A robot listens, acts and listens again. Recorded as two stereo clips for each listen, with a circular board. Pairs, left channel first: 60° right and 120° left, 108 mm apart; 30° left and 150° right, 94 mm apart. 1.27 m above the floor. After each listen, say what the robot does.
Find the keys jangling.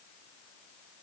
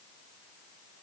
Keep listening.
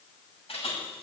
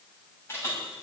Turn 35° right.
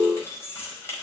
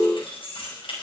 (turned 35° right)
Found it: keys jangling, straight ahead, over 4 m away.